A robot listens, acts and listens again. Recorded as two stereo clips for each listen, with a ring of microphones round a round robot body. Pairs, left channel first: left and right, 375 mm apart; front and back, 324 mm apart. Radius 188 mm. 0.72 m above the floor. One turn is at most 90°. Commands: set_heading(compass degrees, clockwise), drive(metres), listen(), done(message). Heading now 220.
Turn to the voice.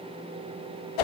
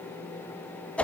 listen()
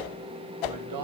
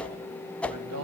set_heading(310)
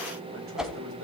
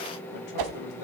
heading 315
set_heading(350)
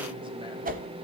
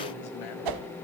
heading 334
set_heading(349)
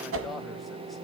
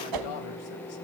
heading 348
done("Facing where the man speaking came from. I can't hear it now.")